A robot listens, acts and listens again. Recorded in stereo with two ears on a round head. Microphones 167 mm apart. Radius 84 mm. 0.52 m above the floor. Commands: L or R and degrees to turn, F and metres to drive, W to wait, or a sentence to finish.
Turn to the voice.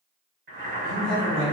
R55
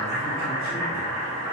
W
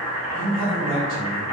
R60
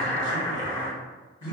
R10
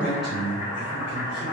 Found it: a man speaking, straight ahead.